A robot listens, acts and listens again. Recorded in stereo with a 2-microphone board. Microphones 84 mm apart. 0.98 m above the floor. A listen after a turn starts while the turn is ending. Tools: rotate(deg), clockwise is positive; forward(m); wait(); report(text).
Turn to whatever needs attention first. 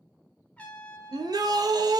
rotate(50)
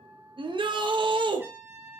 rotate(80)
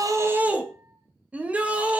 rotate(15)
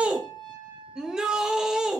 rotate(10)
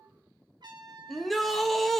report("Found it: a shout, straight ahead.")